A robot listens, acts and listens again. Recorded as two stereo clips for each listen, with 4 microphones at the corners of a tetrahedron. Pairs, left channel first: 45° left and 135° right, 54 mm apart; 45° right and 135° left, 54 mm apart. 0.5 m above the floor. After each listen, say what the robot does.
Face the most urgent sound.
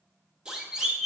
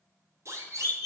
Turn 155° left.
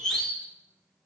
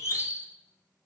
Turn 35° right.
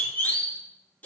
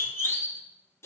Turn 10° right.
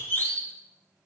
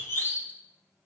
Facing the siren, 2 to 4 m away.